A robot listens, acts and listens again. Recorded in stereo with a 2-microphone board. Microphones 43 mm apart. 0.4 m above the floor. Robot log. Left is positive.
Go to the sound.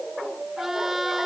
cmd yaw -30
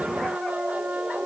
note: So it is at 145° right.
cmd yaw -145
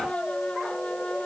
note: The trumpet is now 25° left.
cmd yaw +25
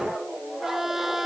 note: The trumpet is now 10° right.
cmd yaw -10
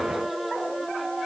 cmd idle
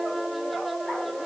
cmd idle
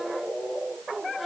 end: Facing where the trumpet came from. I can't hear it now. I did not reach it.